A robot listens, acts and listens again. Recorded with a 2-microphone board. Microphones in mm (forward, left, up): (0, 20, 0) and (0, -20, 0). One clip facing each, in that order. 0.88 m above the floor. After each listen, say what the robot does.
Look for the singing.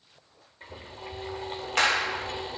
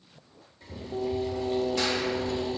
Turn 70° right.
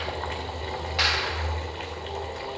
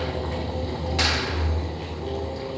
Keep listening.
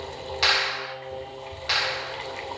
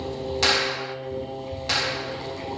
Turn 15° left.
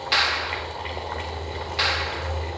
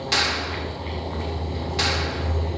Keep listening.
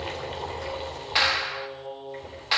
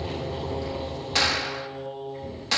Turn 10° left.
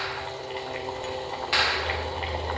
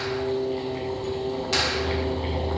Found it: singing, straight ahead.